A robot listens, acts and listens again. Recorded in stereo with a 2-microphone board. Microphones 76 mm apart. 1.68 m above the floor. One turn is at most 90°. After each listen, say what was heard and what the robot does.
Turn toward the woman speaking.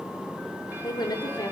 The woman speaking: about 70° left or 110° left. Turn 70° left.
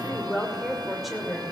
Facing the woman speaking.